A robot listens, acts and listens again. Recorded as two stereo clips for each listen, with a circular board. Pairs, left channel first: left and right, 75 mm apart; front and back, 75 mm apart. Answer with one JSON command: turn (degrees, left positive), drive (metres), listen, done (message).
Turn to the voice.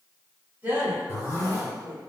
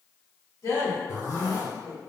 {"turn": -25}
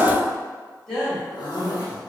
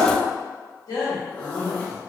{"turn": 10}
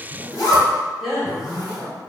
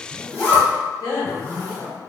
{"done": "Found it: a woman speaking, straight ahead, 1 to 2 m away."}